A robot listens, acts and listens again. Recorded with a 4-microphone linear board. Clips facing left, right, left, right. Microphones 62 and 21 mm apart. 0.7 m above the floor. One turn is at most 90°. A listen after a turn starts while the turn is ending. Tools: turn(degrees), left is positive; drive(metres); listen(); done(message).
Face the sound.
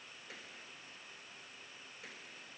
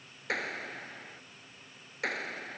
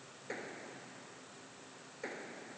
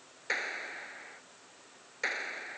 turn(degrees=-75)
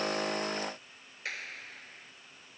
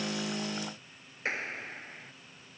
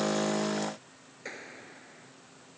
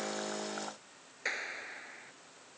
turn(degrees=-30)
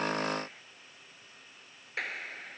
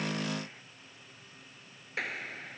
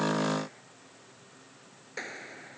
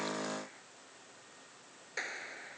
done("Facing the clap.")